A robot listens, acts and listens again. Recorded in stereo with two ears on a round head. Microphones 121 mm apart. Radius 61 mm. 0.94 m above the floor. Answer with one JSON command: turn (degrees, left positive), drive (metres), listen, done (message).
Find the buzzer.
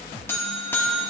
{"turn": 15}
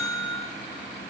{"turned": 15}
{"turn": 150}
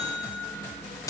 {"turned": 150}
{"turn": 25}
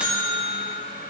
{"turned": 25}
{"turn": -10}
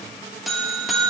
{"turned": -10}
{"done": "Facing the buzzer."}